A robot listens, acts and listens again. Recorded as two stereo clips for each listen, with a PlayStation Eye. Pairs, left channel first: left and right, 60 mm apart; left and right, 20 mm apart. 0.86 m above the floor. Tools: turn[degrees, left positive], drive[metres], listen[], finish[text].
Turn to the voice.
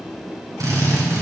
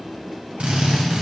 Action: listen[]
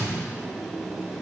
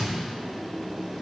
Action: listen[]
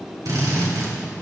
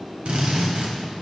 Action: finish[I can't make out anyone speaking, only a drill.]